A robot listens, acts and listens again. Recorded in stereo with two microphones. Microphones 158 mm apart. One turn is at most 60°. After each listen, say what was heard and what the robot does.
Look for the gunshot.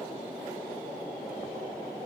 Keep listening.
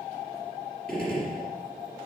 Turn 30° left.
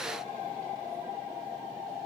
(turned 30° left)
Keep listening.
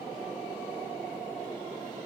I heard a gunshot, but can't make it out now. It was about 25° right or 145° left.